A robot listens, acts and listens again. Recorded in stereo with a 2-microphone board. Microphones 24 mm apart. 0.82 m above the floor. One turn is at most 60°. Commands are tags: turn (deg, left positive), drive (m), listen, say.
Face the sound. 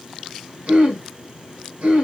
<turn deg="-60"/>
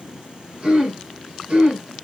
<turn deg="-45"/>
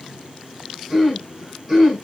<turn deg="-10"/>
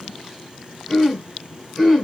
<say>Facing the throat clearing, 1 to 2 m away.</say>